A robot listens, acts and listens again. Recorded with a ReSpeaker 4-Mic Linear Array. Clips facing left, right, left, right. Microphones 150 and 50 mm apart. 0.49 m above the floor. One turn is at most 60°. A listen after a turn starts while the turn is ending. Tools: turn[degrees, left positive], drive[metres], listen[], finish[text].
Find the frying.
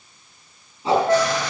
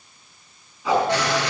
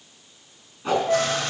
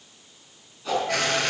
Action: turn[-60]
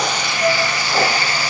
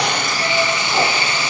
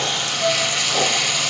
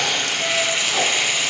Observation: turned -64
Thought: So it is at 20° right.
Action: turn[-20]
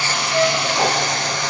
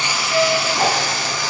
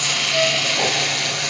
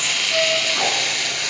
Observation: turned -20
Action: finish[Facing the frying, 1 to 2 m away.]